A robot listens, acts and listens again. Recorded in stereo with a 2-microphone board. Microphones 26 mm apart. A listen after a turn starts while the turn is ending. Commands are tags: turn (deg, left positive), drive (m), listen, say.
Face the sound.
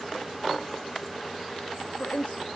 <turn deg="90"/>
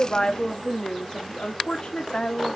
<turn deg="40"/>
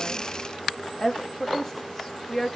<turn deg="10"/>
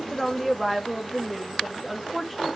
<say>Found it: a woman speaking, straight ahead, 2 to 4 m away.</say>